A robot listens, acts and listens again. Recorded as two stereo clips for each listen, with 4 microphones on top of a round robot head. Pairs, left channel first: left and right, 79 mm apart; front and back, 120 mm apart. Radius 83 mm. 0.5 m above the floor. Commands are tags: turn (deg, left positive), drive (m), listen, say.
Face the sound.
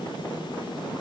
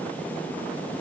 <listen/>
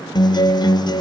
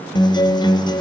<turn deg="55"/>
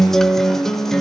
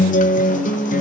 <say>Found it: a guitar, straight ahead, under 1 m away.</say>